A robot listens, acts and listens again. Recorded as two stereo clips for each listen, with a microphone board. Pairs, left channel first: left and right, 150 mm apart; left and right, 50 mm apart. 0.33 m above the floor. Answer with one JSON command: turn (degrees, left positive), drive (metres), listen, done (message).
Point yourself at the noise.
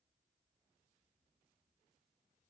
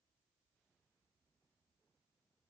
{"listen": true}
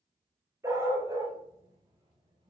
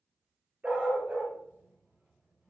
{"turn": -25}
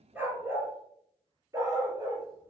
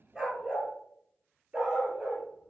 {"turn": -25}
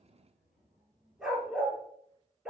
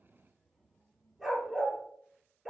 {"done": "Facing the dog barking, 2 to 4 m away."}